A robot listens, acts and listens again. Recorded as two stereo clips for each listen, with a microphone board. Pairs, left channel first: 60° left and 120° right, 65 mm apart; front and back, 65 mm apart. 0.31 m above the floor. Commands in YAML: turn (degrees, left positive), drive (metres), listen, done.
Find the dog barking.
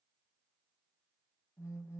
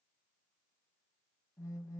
listen: true
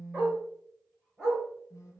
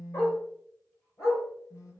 turn: -40
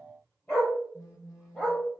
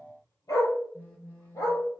done: "Found it: a dog barking, straight ahead, over 4 m away."